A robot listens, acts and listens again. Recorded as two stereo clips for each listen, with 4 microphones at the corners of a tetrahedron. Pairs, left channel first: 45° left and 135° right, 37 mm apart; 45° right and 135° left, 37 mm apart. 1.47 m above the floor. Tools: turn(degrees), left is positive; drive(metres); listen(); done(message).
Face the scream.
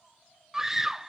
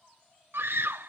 turn(degrees=145)
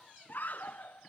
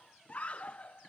done("Found it: a scream, straight ahead.")